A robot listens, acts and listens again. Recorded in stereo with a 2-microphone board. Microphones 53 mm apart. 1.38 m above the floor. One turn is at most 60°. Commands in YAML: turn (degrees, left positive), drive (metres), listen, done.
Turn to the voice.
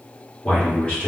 turn: 20
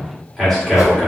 done: "Found it: a man speaking, straight ahead, 1 to 2 m away."